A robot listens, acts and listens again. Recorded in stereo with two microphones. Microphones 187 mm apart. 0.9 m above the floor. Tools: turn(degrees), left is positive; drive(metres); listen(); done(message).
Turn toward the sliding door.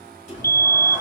turn(degrees=40)
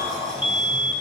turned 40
done("Found it: a sliding door, straight ahead.")